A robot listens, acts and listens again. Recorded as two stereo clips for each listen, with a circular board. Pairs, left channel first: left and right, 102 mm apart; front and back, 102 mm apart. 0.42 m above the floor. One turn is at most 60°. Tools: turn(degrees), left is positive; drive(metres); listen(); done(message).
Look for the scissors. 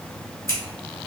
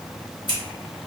turn(degrees=30)
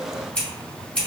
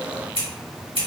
turn(degrees=15)
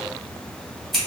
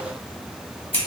done("Facing the scissors.")